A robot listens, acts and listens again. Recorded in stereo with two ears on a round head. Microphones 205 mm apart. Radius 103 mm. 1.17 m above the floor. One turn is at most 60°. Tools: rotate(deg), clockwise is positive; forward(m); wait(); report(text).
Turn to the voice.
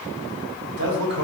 rotate(55)
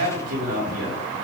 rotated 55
rotate(60)
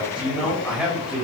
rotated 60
report("Facing the man speaking.")